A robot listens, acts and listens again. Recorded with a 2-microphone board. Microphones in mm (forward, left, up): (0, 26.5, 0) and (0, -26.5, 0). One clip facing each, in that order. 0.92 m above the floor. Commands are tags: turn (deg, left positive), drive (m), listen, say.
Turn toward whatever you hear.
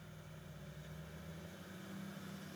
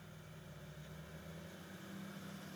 <listen/>
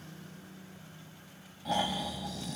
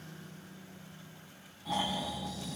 <turn deg="70"/>
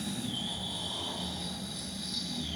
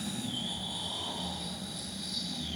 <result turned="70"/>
<say>Facing the snoring, over 4 m away.</say>